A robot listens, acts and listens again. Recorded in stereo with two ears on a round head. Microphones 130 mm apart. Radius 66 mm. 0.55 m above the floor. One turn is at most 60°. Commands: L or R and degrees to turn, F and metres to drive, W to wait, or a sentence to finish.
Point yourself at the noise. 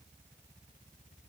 W
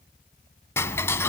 L20
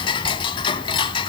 L60
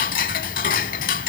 L60
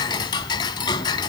L30
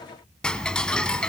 Facing the ticking, under 1 m away.